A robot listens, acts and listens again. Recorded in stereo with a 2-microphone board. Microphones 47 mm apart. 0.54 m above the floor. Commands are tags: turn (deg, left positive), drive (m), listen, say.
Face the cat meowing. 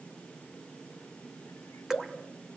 <listen/>
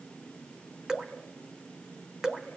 <listen/>
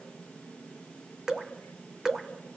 <say>I can't make out a cat meowing, only dripping.</say>